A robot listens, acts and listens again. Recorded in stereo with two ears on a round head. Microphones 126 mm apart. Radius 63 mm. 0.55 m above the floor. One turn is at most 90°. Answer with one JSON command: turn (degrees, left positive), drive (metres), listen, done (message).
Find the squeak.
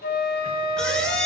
{"turn": 30}
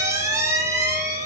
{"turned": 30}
{"turn": -20}
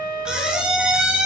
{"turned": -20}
{"done": "Facing the squeak, 1 to 2 m away."}